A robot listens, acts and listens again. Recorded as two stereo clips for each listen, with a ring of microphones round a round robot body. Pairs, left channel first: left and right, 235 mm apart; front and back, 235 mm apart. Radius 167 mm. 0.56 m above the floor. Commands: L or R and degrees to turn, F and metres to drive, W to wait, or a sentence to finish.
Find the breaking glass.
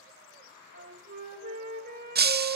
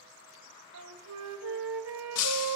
R40
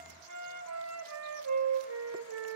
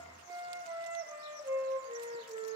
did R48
L10
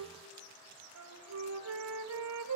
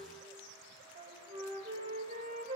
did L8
I heard breaking glass from this way, but can't make it out now.